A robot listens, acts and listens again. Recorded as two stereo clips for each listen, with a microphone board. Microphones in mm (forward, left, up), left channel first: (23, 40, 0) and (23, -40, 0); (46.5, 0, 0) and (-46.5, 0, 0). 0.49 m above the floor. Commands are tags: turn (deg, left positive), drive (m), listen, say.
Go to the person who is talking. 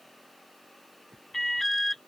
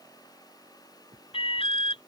<listen/>
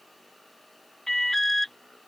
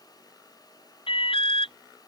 <listen/>
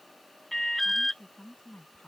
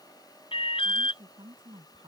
<turn deg="165"/>
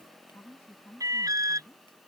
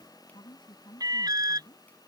<turn deg="30"/>
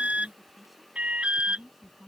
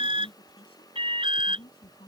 <drive m="1.0"/>
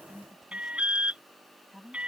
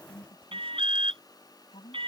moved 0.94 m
<drive m="1.0"/>
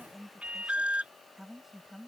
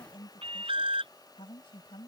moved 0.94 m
<drive m="1.0"/>
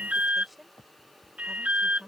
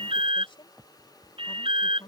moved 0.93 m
<drive m="1.0"/>
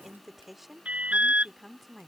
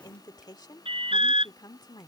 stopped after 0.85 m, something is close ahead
<say>I am next to the woman speaking.</say>